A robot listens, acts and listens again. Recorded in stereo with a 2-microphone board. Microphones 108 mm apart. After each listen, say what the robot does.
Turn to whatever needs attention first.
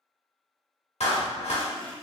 Keep listening.
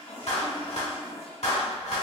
Keep listening.
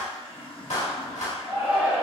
Turn 30° right.
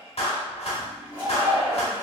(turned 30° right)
Turn 140° right.
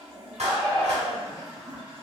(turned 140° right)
Facing the shout.